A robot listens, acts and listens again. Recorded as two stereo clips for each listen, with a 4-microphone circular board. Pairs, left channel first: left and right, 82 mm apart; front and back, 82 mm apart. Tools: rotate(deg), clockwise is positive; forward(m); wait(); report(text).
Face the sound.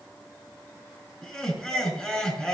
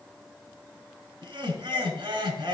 rotate(-165)
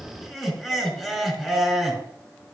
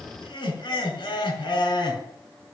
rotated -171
report("Facing the laughter.")